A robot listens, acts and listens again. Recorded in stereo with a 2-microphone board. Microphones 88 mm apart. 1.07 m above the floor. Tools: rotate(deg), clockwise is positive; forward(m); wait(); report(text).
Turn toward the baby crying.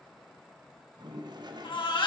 rotate(-65)
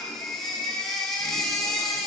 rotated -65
report("Found it: a baby crying, straight ahead.")